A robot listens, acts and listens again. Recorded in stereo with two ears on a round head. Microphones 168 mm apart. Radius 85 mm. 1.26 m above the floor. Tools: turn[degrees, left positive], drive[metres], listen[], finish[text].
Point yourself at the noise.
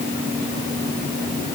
Action: listen[]
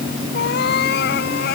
Thought: The cat meowing: about 60° left or 120° left.
Action: turn[60]
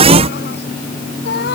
Thought: So it is at 55° left.
Action: turn[55]
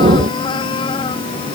Thought: The cat meowing is now 25° left.
Action: turn[25]
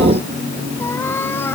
Thought: The cat meowing is now 10° left.
Action: turn[10]
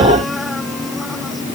Action: listen[]
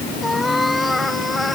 Action: finish[Facing the cat meowing.]